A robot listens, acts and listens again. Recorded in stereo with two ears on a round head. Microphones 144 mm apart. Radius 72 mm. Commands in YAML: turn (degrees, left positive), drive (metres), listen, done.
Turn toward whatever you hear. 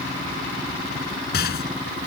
turn: 65
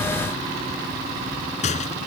turn: 45
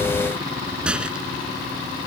done: "Facing the rattle."